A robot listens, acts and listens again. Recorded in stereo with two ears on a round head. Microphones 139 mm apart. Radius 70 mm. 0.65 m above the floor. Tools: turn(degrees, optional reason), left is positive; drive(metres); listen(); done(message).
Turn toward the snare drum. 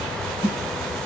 turn(degrees=45, reason="The snare drum: about 45° left or 135° left.")
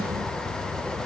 listen()
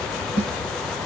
turn(degrees=90, reason="So it is at 90° left.")
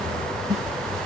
turn(degrees=-20, reason="The snare drum is now 20° right.")
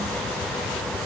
listen()
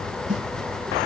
done("Facing the snare drum.")